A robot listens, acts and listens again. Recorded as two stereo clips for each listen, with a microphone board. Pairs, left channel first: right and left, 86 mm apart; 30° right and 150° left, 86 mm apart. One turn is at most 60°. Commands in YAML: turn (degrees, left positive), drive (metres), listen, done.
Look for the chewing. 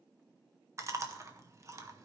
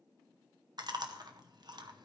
turn: 60
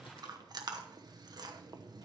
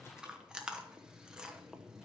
turn: 60
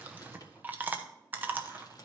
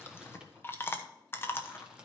turn: 25
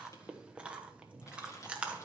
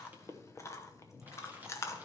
turn: 15
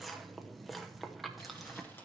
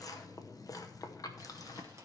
done: "Found it: chewing, straight ahead."